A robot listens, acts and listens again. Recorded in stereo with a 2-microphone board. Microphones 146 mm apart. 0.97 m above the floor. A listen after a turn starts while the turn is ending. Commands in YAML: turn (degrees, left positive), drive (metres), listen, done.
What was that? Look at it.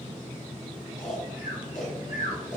turn: 60
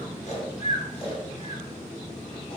turn: 45
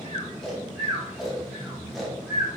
done: "Found it: snoring, straight ahead, under 1 m away."